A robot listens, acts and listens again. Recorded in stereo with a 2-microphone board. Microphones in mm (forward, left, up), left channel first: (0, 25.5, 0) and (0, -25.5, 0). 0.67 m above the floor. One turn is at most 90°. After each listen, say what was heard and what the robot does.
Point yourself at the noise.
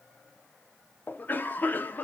The cough: about 40° left or 140° left. Turn 40° left.
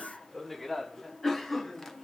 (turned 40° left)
So it is at 10° left. Turn 10° left.
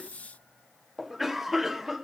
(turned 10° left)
Facing the cough, under 1 m away.